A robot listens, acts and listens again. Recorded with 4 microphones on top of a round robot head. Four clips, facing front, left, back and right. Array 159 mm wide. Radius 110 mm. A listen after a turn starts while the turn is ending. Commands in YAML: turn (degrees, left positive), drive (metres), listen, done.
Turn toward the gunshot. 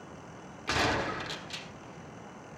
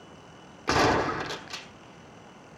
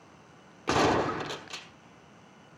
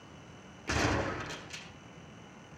turn: 130
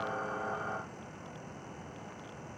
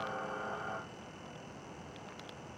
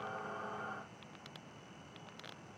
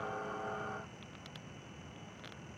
done: "Facing where the gunshot came from. I can't hear it now."